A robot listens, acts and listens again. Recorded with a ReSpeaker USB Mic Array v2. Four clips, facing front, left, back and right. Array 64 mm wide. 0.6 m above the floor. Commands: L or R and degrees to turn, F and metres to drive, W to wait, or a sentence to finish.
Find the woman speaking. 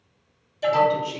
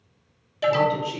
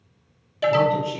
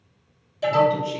L70
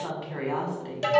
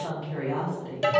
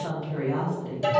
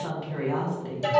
R15
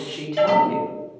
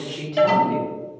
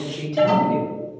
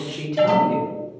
Facing the woman speaking, 1 to 2 m away.